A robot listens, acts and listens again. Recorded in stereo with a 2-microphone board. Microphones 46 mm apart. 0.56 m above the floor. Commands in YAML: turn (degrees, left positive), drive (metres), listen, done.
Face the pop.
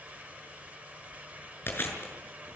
listen: true
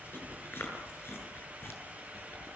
listen: true
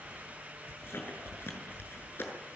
done: "I can't make out a pop to turn to."